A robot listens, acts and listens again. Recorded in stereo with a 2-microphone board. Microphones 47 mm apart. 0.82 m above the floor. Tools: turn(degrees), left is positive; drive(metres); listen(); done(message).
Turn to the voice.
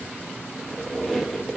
listen()
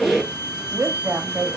turn(degrees=-65)
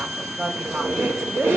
turn(degrees=-40)
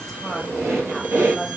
done("Found it: a woman speaking, straight ahead, 1 to 2 m away.")